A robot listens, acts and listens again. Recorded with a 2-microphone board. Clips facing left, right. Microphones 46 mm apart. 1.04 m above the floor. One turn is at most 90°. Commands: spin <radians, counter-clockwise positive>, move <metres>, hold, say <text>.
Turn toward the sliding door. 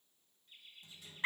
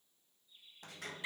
spin -1.22
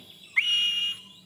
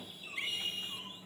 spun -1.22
spin -0.61
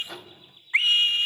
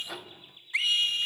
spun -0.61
say Found it: a sliding door, straight ahead, under 1 m away.